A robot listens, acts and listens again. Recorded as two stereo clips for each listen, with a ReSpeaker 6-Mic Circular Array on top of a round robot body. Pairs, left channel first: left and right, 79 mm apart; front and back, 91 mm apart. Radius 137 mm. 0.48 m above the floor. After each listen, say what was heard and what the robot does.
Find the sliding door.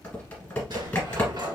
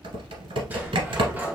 The sliding door: 110° right. Turn 110° right.
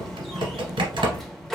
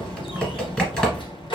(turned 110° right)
Facing the sliding door, 1 to 2 m away.